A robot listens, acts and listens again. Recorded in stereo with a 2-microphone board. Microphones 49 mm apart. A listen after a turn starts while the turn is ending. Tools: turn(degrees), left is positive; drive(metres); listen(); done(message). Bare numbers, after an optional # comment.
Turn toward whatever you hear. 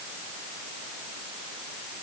listen()
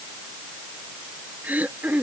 # The throat clearing: about 35° right or 145° right.
turn(-35)
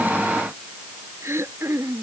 # So it is at 110° right.
turn(-110)
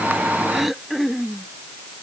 done("Facing the throat clearing.")